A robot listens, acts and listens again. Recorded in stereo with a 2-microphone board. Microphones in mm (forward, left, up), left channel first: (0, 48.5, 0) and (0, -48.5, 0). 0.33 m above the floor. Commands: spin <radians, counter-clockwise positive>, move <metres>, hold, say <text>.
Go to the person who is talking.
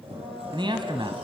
spin -0.96
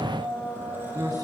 spin -0.96
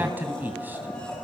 spin -0.35
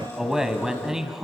move 1.0
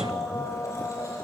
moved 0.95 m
hold
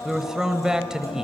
spin -0.17
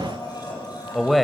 move 1.0
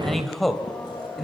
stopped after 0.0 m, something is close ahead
say I am next to the man speaking.